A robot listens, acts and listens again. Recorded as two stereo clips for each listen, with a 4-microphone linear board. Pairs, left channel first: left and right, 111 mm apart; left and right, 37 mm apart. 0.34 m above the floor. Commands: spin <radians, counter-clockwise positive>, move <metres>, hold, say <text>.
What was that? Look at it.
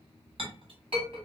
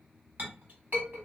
spin -0.96
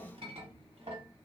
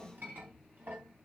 spin -1.13
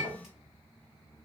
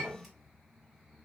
say Facing the clink.